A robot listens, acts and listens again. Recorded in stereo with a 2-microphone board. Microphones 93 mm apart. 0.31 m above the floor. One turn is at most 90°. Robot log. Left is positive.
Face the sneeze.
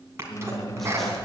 note: The sneeze: about 30° right or 150° right.
cmd yaw -30
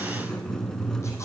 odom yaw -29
cmd idle
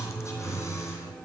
end: I heard a sneeze, but can't make it out now. It was about straight ahead or 120° right.